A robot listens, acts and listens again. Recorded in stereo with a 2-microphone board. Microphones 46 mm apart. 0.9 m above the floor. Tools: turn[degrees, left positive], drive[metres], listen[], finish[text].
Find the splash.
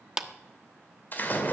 Thought: The splash: about 40° left or 140° left.
Action: turn[40]
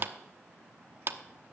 Action: listen[]
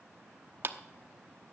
Action: finish[I heard a splash, but can't make it out now. It was about straight ahead or 100° left.]